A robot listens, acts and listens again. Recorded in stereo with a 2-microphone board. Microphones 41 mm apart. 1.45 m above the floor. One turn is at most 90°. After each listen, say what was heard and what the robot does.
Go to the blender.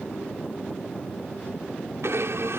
Turn 90° right.
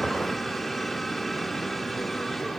Keep listening.
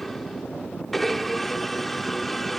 Drive 1.0 m forward.
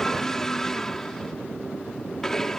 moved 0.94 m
The blender is now 10° left. Turn 10° left.
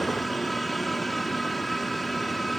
Drive 1.0 m forward.
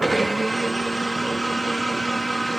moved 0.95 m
Drive 1.0 m forward.
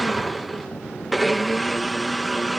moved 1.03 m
Drive 1.0 m forward.
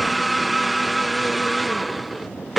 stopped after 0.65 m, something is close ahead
Arrived at the blender, straight ahead.